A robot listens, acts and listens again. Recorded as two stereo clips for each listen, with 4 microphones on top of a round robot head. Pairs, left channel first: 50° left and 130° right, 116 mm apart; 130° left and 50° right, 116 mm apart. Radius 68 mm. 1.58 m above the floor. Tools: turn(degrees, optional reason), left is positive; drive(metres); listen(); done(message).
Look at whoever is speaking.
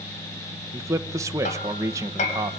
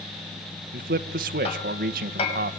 turn(degrees=-65, reason="The man speaking: 65° right.")
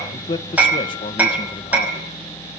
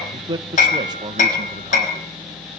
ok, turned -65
done("Facing the man speaking.")